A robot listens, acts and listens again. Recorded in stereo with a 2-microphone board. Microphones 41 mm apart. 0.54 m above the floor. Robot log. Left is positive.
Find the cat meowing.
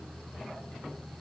cmd idle
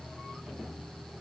cmd idle
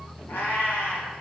note: The cat meowing: about 70° left or 110° left.
cmd yaw +70
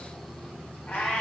note: So it is at 45° left.
cmd yaw +45
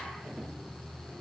cmd idle
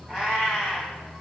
note: The cat meowing is now 20° right.
cmd yaw -20
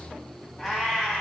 end: Facing the cat meowing.